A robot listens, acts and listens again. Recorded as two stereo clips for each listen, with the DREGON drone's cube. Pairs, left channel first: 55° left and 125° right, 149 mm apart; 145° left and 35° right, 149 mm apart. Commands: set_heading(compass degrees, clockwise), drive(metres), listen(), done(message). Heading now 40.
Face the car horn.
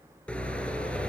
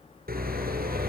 set_heading(65)
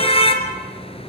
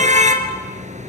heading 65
done("Facing the car horn, 2 to 4 m away.")